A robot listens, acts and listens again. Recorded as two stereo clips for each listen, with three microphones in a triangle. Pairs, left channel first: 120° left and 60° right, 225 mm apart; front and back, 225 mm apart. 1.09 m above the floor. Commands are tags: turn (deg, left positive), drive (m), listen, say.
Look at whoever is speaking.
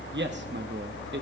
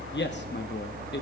<turn deg="-30"/>
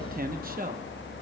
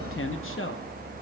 <turn deg="-15"/>
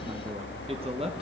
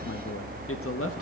<say>Found it: a man speaking, straight ahead.</say>